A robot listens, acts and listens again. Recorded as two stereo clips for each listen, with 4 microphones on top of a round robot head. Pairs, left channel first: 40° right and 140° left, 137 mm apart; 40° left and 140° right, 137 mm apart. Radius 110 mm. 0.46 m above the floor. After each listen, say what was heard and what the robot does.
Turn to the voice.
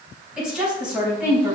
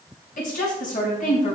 The woman speaking: 60° left. Turn 60° left.
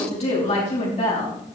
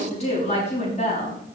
Found it: a woman speaking, straight ahead.